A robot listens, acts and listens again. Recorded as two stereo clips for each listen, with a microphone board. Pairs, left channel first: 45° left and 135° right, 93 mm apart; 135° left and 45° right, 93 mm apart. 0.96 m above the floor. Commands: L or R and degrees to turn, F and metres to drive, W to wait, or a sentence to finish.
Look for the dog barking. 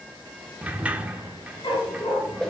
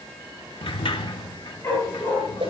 L75
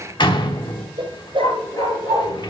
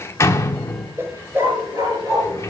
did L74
Facing the dog barking.